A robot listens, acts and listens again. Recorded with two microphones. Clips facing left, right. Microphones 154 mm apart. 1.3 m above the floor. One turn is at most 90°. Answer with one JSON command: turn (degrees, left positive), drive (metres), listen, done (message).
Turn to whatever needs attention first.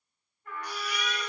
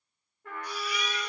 {"turn": 70}
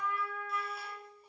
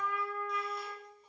{"listen": true}
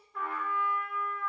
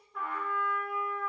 {"listen": true}
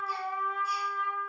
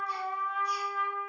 {"done": "I heard a baby crying, but can't make it out now. It was about straight ahead or 40° left."}